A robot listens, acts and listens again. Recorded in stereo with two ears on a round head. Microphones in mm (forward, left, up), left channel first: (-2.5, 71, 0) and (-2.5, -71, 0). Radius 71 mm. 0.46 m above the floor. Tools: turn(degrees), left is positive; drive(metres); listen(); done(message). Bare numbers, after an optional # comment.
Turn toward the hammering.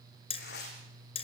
# The hammering: about 40° left or 140° left.
turn(40)
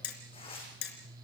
# So it is at 100° left.
turn(100)
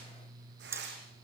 # The hammering is now 15° right.
turn(-15)
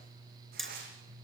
done("Facing the hammering.")